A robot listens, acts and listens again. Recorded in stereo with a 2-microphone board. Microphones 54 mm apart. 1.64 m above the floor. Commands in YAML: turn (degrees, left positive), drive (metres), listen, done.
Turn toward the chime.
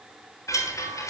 turn: 90
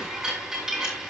turn: -10
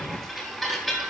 done: "Facing the chime, over 4 m away."